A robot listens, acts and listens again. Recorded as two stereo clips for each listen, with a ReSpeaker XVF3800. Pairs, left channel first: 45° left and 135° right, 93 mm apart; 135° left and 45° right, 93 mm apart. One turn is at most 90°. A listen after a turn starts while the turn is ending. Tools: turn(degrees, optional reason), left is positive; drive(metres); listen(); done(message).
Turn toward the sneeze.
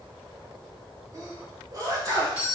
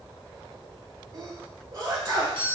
turn(degrees=-90, reason="The sneeze: 90° right.")
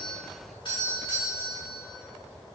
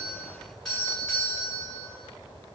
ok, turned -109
turn(degrees=20, reason="Nothing new. It was at 20° left.")
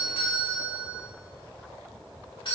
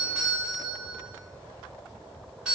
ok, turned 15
done("I heard a sneeze from this way, but can't make it out now.")